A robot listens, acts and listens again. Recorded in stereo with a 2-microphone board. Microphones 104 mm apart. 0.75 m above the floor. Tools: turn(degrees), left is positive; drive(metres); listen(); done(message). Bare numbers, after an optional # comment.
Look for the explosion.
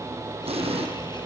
# The explosion: about 70° right or 110° right.
turn(-70)
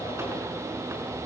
listen()
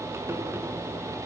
done("I heard an explosion, but can't make it out now. It was about straight ahead or 40° right.")